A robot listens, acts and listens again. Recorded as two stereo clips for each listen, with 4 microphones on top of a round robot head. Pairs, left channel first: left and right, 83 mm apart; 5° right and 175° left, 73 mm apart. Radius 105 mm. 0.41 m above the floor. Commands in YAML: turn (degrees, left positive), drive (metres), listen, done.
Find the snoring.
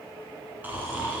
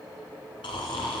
turn: -15
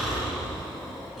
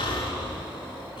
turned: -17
done: "Facing the snoring."